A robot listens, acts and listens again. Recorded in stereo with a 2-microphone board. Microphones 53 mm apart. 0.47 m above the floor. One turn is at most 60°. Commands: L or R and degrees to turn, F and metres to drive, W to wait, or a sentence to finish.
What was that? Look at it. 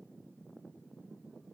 W
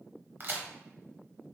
R45
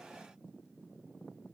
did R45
W
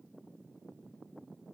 I heard a crack, but can't make it out now. It was about straight ahead or 90° right.